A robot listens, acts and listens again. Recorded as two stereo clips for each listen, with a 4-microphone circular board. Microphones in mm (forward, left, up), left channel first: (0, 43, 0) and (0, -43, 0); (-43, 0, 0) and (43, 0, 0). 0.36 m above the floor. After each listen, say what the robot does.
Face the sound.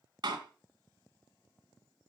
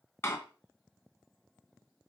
Turn 120° right.
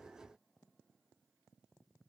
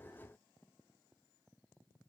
I heard a door slam from this way, but can't make it out now.